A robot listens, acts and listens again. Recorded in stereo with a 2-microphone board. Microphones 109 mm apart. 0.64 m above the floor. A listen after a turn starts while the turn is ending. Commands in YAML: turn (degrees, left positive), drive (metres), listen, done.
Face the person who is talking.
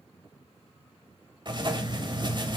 listen: true
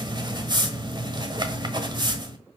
listen: true
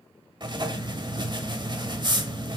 done: "I can't make out anyone speaking, only writing."